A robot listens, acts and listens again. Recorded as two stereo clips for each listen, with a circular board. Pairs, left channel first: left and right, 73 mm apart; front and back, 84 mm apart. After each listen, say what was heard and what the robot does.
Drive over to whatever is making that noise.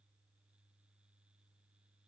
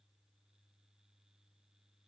Keep listening.
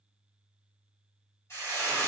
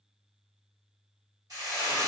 The frying: 140° left. Turn 140° left.
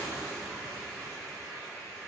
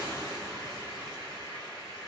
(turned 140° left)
Drive 1.0 m forward.
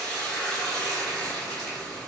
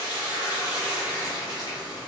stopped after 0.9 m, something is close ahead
The frying is now 10° left. Turn 10° left.
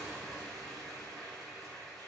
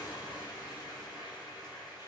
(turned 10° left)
Arrived at the frying, straight ahead.